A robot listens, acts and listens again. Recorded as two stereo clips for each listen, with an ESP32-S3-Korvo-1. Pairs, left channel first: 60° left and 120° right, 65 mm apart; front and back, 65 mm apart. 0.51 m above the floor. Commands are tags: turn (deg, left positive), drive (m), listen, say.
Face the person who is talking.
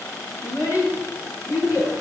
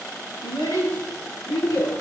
<turn deg="25"/>
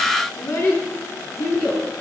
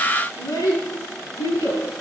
<turn deg="15"/>
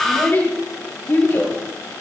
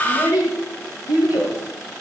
<say>Found it: a child speaking, straight ahead, over 4 m away.</say>